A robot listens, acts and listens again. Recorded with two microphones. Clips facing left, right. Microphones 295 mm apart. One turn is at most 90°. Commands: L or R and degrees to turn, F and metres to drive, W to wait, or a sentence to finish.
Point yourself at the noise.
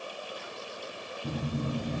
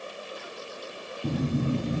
R90
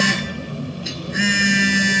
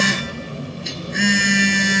Found it: a phone buzzing, straight ahead.